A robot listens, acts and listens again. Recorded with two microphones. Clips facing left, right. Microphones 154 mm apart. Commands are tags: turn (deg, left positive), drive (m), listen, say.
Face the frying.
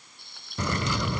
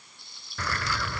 <turn deg="60"/>
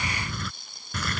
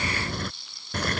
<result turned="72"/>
<turn deg="45"/>
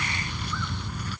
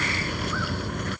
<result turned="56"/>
<turn deg="-10"/>
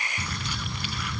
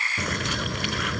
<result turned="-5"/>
<listen/>
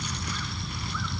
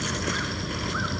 <say>I heard frying from this way, but can't make it out now.</say>